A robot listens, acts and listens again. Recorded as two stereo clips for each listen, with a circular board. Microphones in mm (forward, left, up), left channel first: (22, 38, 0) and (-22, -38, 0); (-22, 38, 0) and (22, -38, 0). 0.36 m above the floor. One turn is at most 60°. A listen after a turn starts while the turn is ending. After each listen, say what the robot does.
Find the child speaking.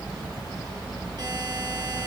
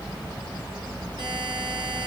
Keep listening.
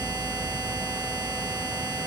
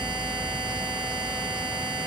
Keep listening.
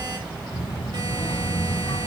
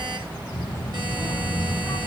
Turn 60° left.
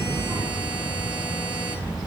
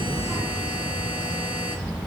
Turn 15° left.
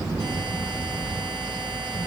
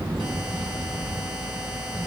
Facing the child speaking, over 4 m away.